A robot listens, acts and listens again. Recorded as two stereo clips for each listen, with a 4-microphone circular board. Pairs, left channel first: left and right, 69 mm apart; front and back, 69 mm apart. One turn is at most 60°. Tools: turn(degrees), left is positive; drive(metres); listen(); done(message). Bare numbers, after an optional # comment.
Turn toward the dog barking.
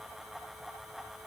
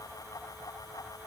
listen()
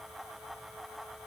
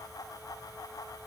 listen()
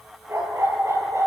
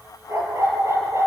# The dog barking: 135° right.
turn(-60)
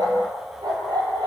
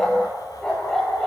# The dog barking is now 85° right.
turn(-60)
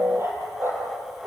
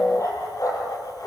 # The dog barking is now 35° right.
turn(-35)
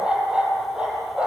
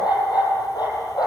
# The dog barking is now 15° right.
turn(-15)
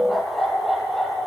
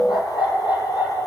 done("Facing the dog barking, over 4 m away.")